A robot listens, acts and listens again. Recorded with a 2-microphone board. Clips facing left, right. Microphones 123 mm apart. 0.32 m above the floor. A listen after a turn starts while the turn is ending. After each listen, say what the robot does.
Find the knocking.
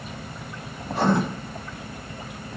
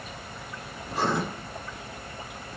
Keep listening.
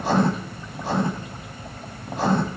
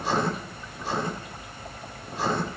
Keep listening.
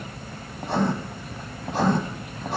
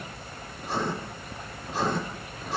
I can't make out knocking to turn to.